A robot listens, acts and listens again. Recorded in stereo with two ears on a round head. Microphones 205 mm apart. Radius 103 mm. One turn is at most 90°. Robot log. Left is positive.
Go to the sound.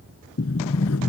note: The sliding door: about 70° left or 110° left.
cmd yaw +70
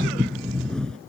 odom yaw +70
cmd fwd 1.0
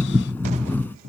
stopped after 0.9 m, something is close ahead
note: The sliding door is now 10° left.
cmd yaw +10
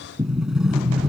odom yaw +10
end: Something is in my way. I am facing the sliding door but have not reached it.